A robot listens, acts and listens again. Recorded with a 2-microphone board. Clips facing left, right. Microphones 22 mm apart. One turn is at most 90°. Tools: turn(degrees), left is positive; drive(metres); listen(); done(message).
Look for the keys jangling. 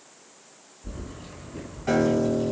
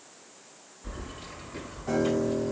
turn(degrees=-40)
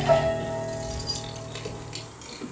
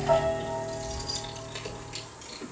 turn(degrees=20)
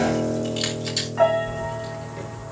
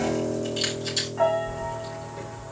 turn(degrees=30)
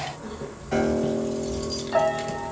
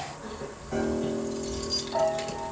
done("Facing the keys jangling.")